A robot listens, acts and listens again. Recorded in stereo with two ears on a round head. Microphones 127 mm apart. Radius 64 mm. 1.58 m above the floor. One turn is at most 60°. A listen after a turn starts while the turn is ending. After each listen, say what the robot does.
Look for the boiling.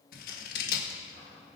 Keep listening.
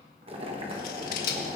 Turn 40° right.
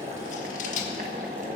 Turn 60° right.
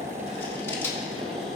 Turn 45° right.
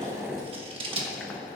Turn 10° left.
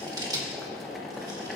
Facing the boiling.